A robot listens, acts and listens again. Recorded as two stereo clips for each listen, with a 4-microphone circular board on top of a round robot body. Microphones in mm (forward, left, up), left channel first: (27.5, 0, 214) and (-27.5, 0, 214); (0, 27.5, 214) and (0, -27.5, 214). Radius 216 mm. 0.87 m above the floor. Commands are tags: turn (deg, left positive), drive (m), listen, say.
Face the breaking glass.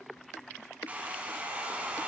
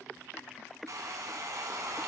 <listen/>
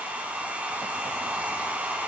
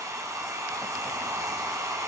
<listen/>
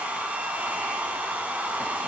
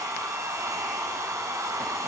<say>I can't make out breaking glass to turn to.</say>